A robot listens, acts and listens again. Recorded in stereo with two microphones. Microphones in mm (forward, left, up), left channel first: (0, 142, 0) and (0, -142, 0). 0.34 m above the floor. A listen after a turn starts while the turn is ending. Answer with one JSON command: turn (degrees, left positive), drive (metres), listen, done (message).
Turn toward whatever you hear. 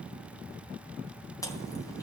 {"turn": 30}
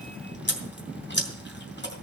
{"turn": 135}
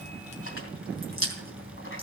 {"turn": 55}
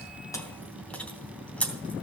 {"done": "Facing the chewing, 2 to 4 m away."}